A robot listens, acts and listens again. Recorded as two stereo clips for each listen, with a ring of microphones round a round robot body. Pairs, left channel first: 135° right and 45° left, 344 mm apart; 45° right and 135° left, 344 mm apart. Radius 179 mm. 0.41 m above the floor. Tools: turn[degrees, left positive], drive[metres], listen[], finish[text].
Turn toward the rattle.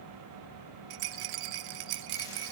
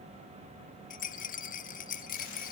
Thought: The rattle: 25° left.
Action: turn[25]
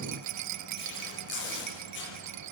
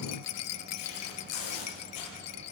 Action: finish[Found it: a rattle, straight ahead, under 1 m away.]